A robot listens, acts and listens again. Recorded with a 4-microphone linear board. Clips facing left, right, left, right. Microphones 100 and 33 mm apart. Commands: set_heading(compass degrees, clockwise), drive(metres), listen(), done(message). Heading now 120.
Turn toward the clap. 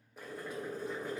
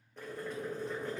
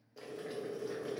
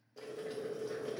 listen()
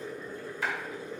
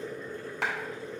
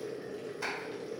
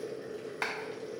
set_heading(190)
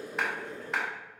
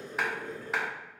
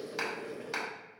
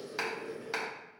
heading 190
done("Found it: a clap, straight ahead, 1 to 2 m away.")